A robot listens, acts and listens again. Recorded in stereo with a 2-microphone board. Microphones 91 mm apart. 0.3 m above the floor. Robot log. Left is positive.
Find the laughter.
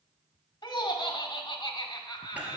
note: The laughter: about 60° left or 120° left.
cmd yaw +60
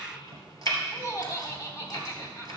note: So it is at 35° left.
cmd yaw +35
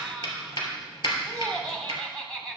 note: The laughter is now 10° left.
cmd yaw +10
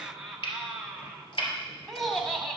end: Facing the laughter.